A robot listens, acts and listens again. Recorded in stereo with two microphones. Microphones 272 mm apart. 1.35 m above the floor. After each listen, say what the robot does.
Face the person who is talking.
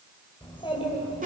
Turn 20° left.
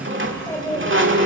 Turn 30° left.
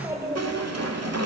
Turn 10° right.
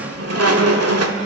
Keep listening.
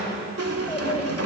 Turn 20° left.
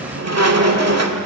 Keep listening.
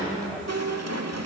Keep listening.
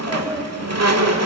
Facing the child speaking.